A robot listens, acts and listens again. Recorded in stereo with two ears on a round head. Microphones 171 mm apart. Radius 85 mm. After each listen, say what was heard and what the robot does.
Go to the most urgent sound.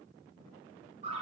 Keep listening.
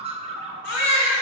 The baby crying: about 60° left or 120° left. Turn 60° left.
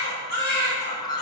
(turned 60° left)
So it is at 55° left. Turn 55° left.
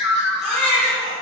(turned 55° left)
Drive 1.0 m forward.
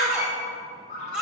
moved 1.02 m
Drive 1.0 m forward.
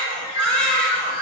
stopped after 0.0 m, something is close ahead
Arrived at the baby crying, straight ahead.